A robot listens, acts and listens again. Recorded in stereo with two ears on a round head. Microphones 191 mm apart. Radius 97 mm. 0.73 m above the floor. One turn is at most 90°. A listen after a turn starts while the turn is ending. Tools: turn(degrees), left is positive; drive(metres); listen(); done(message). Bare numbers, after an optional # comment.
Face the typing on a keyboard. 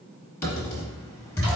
turn(30)
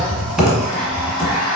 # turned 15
done("Facing the typing on a keyboard, 1 to 2 m away.")